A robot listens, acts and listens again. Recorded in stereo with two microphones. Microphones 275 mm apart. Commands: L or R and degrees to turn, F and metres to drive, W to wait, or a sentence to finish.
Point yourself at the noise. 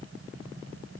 W
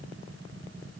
W
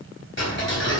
L50
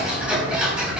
Facing the ticking, 2 to 4 m away.